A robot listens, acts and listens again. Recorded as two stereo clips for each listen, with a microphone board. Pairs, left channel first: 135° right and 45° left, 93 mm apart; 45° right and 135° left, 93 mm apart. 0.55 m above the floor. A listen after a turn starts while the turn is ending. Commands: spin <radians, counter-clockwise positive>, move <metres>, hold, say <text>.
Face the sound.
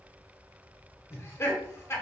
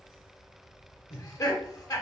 spin -1.48
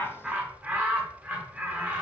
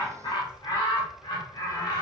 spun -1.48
spin -0.44
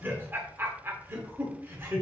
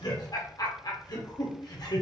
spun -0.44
spin -0.26
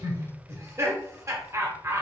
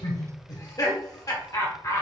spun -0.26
say Facing the laughter, 1 to 2 m away.